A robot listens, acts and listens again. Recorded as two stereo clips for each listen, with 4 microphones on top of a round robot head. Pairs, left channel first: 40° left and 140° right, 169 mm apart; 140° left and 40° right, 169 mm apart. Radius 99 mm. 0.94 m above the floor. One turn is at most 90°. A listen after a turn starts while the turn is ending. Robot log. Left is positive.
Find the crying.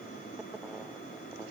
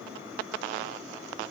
cmd idle
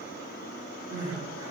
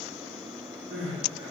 note: The crying: 70° right.
cmd yaw -70
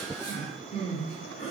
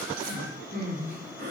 note: The crying is now 10° right.
cmd yaw -10
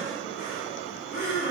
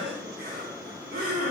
end: Facing the crying, 1 to 2 m away.